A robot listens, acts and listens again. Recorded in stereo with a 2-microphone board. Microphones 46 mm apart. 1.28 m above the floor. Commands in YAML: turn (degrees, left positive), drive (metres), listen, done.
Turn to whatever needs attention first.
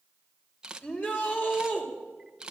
turn: 30
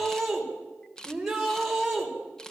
done: "Facing the shout."